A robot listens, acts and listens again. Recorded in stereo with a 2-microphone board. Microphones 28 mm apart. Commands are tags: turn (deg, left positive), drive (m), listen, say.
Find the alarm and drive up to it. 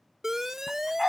<turn deg="-15"/>
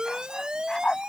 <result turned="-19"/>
<turn deg="-145"/>
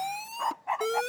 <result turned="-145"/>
<drive m="1.0"/>
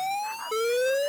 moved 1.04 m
<drive m="1.0"/>
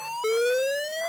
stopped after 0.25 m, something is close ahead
<turn deg="-15"/>
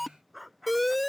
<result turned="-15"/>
<say>Arrived at the alarm, straight ahead.</say>